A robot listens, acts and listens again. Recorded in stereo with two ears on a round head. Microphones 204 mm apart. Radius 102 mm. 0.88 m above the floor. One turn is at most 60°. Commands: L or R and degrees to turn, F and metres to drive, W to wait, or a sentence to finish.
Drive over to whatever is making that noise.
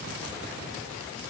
W
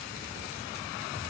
W
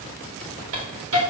R60
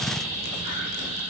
R35
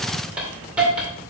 F1.0
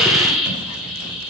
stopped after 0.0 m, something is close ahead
Blocked. The hiss is further on, straight ahead.